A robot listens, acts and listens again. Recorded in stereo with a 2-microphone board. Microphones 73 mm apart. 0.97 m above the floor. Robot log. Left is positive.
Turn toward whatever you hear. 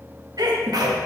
note: The sneeze: about 65° right or 115° right.
cmd yaw -65
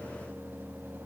cmd idle
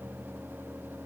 end: I heard a sneeze, but can't make it out now. It was about straight ahead or 50° right.